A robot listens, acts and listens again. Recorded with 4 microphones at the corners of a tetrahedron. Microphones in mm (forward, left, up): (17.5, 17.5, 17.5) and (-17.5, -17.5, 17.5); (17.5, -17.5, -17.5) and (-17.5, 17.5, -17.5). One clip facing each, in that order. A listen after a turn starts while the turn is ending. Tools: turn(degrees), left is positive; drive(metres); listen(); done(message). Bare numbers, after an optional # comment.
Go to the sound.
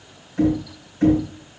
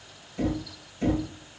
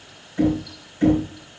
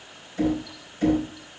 # The knocking: 20° left.
turn(20)
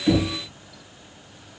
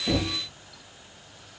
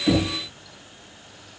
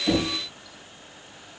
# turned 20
listen()
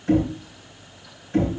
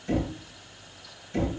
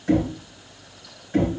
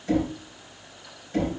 drive(1.0)
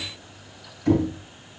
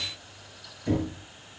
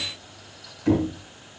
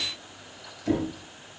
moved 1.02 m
drive(1.0)
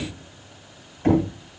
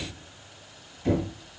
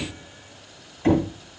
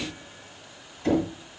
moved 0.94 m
# The knocking is now 10° left.
turn(10)
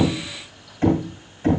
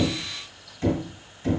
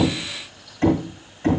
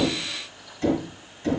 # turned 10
drive(1.0)
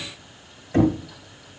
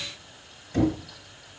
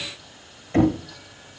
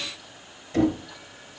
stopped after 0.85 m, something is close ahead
done("I am next to the knocking.")